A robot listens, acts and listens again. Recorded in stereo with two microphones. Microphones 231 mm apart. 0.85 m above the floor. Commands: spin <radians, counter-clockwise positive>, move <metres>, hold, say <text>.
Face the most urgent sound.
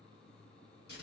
hold
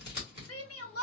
spin 1.22
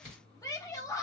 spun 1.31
spin 0.26
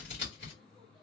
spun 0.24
hold
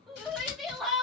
say Found it: a shout, straight ahead.